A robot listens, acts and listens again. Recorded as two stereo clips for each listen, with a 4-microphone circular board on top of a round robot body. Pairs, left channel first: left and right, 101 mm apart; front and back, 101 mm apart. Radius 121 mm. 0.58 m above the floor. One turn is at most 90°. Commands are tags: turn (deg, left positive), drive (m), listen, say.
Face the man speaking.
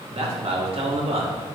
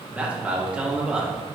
<turn deg="-90"/>
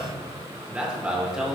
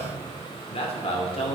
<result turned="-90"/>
<say>Found it: a man speaking, straight ahead.</say>